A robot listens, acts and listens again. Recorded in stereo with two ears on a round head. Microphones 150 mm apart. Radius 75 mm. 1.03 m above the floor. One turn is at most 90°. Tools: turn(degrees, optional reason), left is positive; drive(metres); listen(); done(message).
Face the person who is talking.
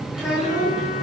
turn(degrees=-30)
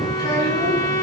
listen()
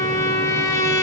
listen()
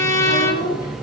turn(degrees=25, reason="So it is at 25° left.")
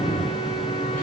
listen()
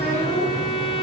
listen()
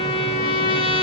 done("I heard a child speaking from this way, but can't make it out now.")